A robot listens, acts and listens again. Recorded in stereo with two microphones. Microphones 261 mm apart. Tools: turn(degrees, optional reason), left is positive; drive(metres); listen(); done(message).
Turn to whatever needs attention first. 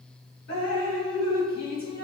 listen()
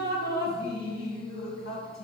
listen()
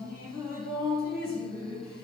done("I can't make out anything urgent to turn to.")